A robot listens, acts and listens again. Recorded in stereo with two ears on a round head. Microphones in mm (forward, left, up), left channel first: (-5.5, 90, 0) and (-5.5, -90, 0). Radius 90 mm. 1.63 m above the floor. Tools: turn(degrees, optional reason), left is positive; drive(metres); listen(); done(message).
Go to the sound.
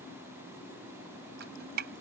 turn(degrees=-55, reason="The dripping: about 55° right or 125° right.")
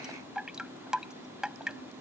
drive(metres=1.0)
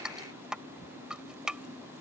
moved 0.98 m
drive(metres=1.0)
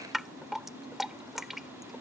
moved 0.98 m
drive(metres=1.0)
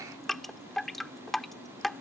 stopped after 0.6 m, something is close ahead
done("Arrived at the dripping, straight ahead.")